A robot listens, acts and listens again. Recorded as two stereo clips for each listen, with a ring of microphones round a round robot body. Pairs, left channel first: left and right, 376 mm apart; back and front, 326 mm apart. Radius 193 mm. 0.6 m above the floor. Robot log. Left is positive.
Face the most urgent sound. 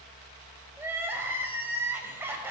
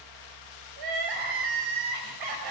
end: Found it: crying, straight ahead, over 4 m away.